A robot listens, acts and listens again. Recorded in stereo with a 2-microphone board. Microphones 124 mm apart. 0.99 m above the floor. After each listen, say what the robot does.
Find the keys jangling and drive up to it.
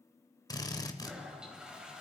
Keep listening.
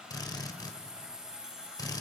Turn 30° right.
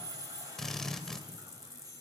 Turn 25° left.
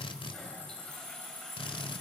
Turn 20° right.
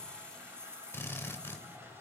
Turn 10° left.
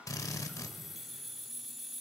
Drive 1.0 m forward.
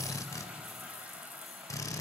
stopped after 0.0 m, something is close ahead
Keep listening.
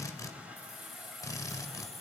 Something is in my way. I am facing the keys jangling but have not reached it.